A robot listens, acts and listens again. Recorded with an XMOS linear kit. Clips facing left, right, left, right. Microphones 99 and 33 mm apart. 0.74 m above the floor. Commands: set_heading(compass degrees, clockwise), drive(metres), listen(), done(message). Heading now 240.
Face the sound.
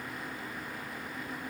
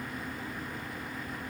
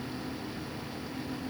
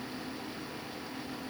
listen()
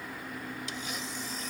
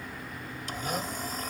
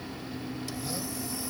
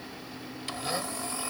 set_heading(285)
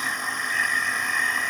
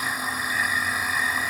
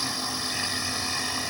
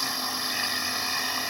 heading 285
done("Facing the blender.")